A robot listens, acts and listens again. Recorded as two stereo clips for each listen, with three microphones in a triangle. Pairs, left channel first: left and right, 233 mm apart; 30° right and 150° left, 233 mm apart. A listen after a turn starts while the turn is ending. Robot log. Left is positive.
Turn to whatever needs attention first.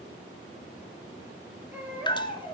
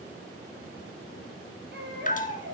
note: The baby crying: 170° right.
cmd yaw -170
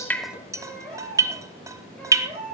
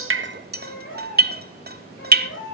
end: Facing the baby crying, over 4 m away.